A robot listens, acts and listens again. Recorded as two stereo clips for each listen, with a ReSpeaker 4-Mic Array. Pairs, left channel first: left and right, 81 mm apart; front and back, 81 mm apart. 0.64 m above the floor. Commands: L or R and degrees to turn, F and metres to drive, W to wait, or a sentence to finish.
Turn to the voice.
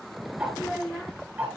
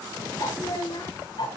L15
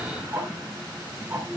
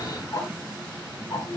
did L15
W
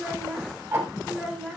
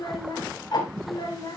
Facing the child speaking.